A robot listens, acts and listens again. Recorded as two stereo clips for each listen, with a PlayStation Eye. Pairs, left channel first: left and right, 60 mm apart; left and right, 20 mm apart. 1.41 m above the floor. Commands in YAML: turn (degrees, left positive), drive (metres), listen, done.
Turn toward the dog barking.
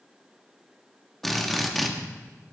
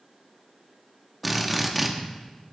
listen: true
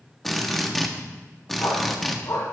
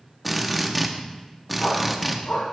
turn: 70
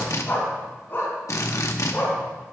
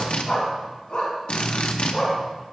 turn: 35
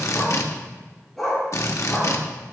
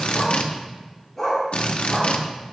done: "Found it: a dog barking, straight ahead."